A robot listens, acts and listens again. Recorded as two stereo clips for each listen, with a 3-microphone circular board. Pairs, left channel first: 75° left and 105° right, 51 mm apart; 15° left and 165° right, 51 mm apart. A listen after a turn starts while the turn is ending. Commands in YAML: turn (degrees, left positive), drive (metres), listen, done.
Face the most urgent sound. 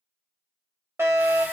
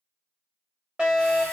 turn: -100
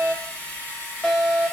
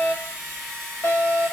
turn: -20
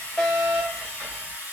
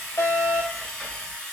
done: "Facing the fire alarm, 1 to 2 m away."